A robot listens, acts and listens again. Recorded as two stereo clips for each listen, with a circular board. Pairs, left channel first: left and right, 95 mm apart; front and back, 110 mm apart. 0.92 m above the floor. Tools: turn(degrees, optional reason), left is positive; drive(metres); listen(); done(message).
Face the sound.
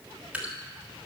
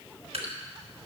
turn(degrees=-165, reason="The dripping: 165° right.")
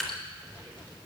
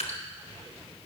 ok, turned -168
done("Facing the dripping, 1 to 2 m away.")